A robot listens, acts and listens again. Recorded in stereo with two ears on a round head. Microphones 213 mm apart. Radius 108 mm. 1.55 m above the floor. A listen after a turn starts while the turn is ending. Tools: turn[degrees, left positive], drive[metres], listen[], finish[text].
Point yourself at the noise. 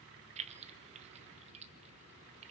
Thought: The keys jangling: about 25° right or 155° right.
Action: turn[-25]
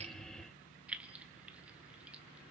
Action: finish[Facing the keys jangling, under 1 m away.]